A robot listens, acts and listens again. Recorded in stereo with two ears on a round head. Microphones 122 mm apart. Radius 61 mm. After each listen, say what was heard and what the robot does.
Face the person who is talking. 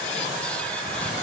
Keep listening.
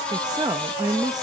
The woman speaking: about 25° right or 155° right. Turn 25° right.
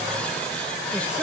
Keep listening.
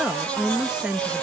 Found it: a woman speaking, straight ahead.